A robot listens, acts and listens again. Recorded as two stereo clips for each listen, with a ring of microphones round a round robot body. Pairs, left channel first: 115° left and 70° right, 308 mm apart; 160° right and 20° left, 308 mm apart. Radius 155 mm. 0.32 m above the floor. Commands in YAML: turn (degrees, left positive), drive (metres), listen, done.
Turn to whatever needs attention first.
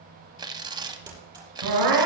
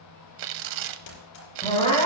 turn: -85
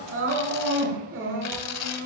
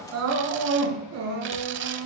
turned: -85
turn: -20
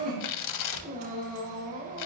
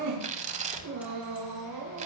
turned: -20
done: "Facing the crying."